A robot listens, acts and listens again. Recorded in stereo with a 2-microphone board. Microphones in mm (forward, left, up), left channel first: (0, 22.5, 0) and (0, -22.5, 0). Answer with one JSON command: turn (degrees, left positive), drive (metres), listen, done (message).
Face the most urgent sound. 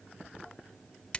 {"listen": true}
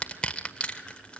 {"listen": true}
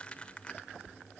{"done": "I can't make out anything urgent to turn to."}